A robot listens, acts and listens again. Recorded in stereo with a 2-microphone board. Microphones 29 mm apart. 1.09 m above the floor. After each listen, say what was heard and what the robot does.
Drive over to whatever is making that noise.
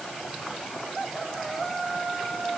Keep listening.
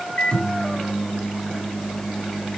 The microwave: about 40° left or 140° left. Turn 40° left.
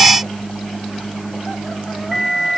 Drive 1.0 m forward.
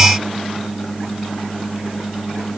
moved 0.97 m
Drive 1.0 m forward.
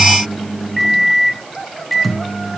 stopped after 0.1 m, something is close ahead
I am next to the microwave.